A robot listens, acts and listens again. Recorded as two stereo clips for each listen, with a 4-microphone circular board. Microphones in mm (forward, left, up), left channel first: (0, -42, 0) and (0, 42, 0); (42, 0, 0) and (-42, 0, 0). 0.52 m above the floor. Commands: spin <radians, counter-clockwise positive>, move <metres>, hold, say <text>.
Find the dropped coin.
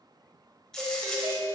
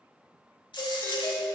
say Facing the dropped coin, 1 to 2 m away.